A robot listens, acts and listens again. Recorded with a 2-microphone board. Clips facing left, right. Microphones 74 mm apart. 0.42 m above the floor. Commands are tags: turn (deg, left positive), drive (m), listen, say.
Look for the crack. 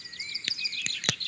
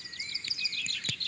<turn deg="90"/>
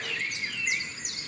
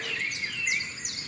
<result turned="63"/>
<turn deg="25"/>
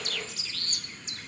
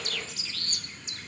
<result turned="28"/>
<say>I heard a crack from this way, but can't make it out now.</say>